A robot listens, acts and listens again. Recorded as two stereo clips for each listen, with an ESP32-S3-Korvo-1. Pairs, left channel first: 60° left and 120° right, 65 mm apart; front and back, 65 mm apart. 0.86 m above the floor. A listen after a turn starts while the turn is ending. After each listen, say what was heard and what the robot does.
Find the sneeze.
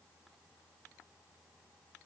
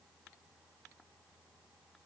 Keep listening.
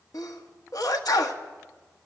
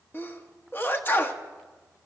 The sneeze: 55° left. Turn 55° left.
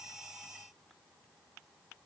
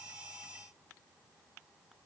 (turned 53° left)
I heard a sneeze from this way, but can't make it out now.